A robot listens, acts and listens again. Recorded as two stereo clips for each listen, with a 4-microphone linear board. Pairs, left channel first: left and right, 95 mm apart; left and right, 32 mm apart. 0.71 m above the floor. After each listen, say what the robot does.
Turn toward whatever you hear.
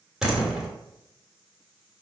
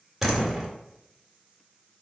Turn 30° right.
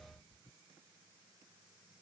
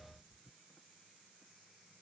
Keep listening.
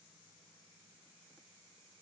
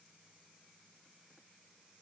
I heard a door slam, but can't make it out now. It was about 25° left or 145° right.